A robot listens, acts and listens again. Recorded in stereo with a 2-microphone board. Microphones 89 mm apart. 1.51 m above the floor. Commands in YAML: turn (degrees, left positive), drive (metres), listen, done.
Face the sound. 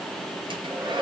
turn: -70
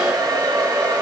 turn: -45
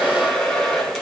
done: "Found it: a hair dryer, straight ahead, 2 to 4 m away."